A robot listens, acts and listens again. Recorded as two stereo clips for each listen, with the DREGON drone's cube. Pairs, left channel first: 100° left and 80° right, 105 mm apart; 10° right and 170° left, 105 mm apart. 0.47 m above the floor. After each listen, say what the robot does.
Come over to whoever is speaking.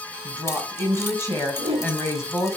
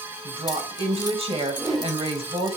Turn 160° left.
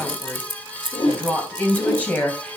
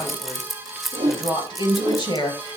Turn 25° left.
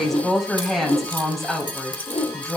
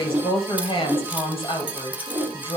Turn 10° left.
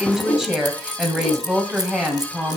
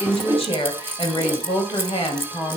Drive 1.0 m forward.
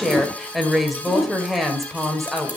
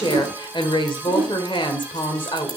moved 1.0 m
Turn 10° left.
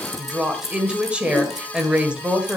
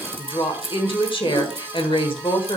Drive 1.0 m forward.
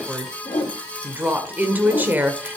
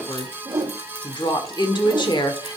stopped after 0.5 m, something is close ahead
Turn 15° right.
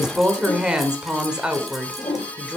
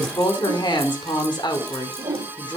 Arrived at the woman speaking, straight ahead.